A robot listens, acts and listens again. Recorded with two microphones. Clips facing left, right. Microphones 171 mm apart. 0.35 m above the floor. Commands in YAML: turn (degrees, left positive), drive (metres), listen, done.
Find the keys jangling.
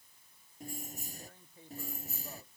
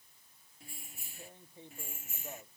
turn: 35
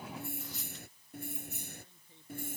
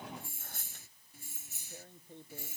turn: 125
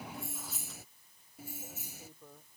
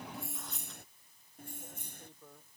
done: "Found it: keys jangling, straight ahead."